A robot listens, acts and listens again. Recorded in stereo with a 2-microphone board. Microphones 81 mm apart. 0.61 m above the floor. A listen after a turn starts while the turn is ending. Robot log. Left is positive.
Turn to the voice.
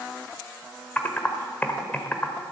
cmd idle
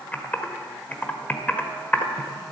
cmd idle
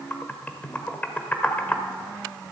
end: I can't make out anyone speaking to turn to.